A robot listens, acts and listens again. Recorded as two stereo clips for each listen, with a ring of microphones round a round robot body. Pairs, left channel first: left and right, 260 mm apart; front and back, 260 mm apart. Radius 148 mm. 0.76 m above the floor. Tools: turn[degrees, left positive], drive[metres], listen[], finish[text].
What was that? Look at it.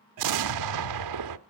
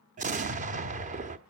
Thought: The explosion: 115° right.
Action: turn[-115]
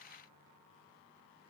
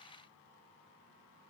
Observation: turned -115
Action: finish[I heard an explosion from this way, but can't make it out now.]